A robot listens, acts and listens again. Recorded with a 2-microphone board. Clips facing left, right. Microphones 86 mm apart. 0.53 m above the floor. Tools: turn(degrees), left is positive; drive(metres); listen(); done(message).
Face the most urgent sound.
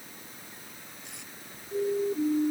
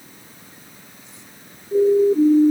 turn(degrees=-40)
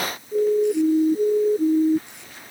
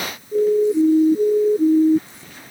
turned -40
done("Facing the siren.")